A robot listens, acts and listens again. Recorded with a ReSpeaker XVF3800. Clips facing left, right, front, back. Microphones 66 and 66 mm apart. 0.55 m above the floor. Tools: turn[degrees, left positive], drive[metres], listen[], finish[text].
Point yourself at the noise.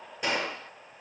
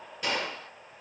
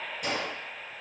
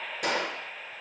Thought: The gunshot: 160° left.
Action: turn[160]
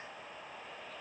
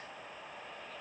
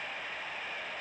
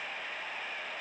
Action: finish[Facing where the gunshot came from. I can't hear it now.]